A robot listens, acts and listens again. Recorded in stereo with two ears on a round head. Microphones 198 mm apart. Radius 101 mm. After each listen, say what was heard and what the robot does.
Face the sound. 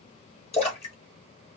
The splash: about 30° left or 150° left. Turn 30° left.
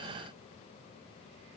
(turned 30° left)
Keep listening.
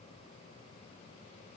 I heard a splash, but can't make it out now. It was about straight ahead or 120° left.